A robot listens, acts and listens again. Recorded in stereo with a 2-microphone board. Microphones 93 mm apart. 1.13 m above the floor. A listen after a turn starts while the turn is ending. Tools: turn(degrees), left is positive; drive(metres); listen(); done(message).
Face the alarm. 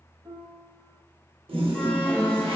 turn(degrees=30)
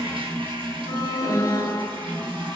turn(degrees=135)
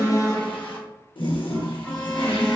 turn(degrees=10)
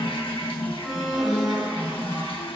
done("Found it: an alarm, straight ahead.")